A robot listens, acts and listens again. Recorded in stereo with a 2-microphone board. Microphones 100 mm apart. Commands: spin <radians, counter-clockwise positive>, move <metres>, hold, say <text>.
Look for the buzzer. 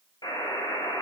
spin 0.79
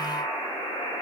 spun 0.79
spin 1.57
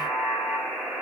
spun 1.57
say Found it: a buzzer, straight ahead.